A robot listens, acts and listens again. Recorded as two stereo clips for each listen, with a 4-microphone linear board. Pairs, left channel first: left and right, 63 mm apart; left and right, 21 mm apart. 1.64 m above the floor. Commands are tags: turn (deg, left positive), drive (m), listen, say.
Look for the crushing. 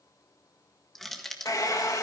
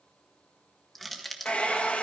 <turn deg="30"/>
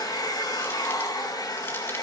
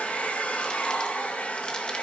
<listen/>
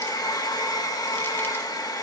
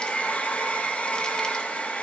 <listen/>
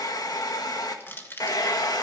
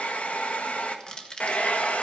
<turn deg="145"/>
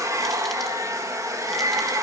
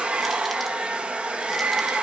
<listen/>
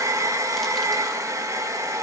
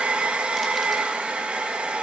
<listen/>
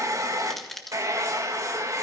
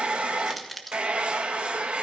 <say>Facing the crushing.</say>